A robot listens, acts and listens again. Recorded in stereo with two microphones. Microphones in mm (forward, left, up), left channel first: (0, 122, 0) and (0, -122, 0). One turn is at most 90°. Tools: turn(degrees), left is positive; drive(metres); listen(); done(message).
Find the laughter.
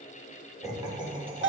turn(degrees=-25)
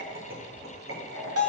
turn(degrees=-90)
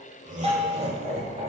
turn(degrees=-25)
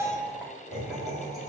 done("Facing the laughter.")